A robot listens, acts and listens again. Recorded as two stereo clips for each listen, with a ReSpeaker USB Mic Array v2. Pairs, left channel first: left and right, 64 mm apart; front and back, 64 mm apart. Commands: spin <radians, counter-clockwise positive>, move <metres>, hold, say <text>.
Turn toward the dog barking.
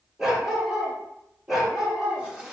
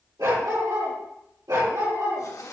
spin -2.97
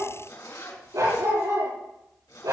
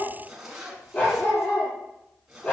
spin -1.13
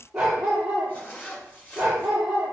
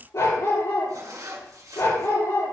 spin -0.17
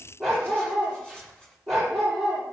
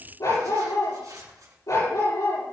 say Facing the dog barking.